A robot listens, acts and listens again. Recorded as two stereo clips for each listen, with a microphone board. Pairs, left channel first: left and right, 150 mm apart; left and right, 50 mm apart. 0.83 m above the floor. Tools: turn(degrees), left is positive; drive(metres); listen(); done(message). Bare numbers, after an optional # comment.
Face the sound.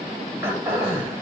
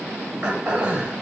# The throat clearing: about 15° right or 165° right.
turn(-15)
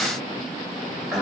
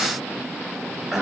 done("Facing the throat clearing, 2 to 4 m away.")